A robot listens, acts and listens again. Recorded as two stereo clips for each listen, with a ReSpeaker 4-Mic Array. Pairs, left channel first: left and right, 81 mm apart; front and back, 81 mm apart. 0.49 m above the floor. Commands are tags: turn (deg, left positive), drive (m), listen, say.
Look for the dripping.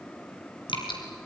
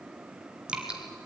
<turn deg="105"/>
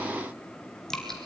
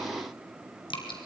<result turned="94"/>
<say>Facing the dripping.</say>